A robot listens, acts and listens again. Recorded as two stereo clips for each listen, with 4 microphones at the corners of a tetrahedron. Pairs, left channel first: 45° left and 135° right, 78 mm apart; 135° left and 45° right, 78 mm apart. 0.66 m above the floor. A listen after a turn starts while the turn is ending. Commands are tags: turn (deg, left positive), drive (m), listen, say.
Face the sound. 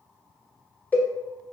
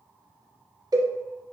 <turn deg="-20"/>
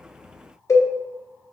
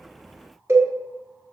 <say>Found it: a cowbell, straight ahead.</say>